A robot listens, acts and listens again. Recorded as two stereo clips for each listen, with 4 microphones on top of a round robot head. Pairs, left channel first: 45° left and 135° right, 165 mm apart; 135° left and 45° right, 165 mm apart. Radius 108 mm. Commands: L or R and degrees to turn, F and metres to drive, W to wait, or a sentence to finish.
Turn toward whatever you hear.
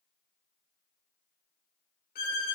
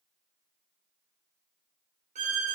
L10
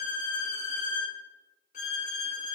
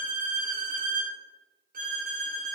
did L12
Facing the violin, 1 to 2 m away.